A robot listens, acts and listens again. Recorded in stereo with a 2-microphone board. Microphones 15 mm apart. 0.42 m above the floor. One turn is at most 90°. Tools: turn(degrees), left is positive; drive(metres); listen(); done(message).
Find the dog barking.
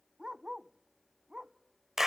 turn(degrees=-65)
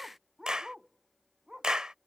turn(degrees=-45)
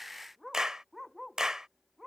turn(degrees=-10)
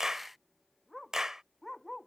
done("Facing the dog barking.")